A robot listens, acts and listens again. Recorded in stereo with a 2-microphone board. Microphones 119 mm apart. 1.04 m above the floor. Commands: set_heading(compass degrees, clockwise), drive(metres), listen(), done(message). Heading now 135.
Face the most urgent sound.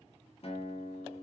listen()
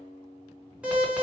set_heading(165)
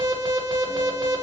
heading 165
set_heading(305)
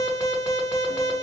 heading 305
set_heading(280)
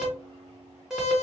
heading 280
done("Found it: an alarm, straight ahead, 1 to 2 m away.")